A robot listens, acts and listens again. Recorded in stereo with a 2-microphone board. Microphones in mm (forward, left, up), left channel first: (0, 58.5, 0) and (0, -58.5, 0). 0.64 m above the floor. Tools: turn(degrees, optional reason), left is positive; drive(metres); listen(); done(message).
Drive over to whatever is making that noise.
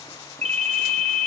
turn(degrees=-70, reason="The ringtone: about 70° right or 110° right.")
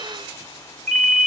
drive(metres=1.0)
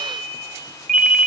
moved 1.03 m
drive(metres=1.0)
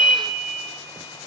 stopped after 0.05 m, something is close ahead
done("I am next to the ringtone.")